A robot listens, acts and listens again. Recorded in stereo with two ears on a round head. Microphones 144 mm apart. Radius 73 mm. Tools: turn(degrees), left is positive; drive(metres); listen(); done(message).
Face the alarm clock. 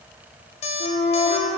turn(degrees=40)
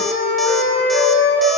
listen()
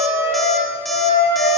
listen()
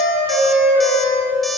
done("I heard an alarm clock, but can't make it out now. It was about straight ahead or 100° left.")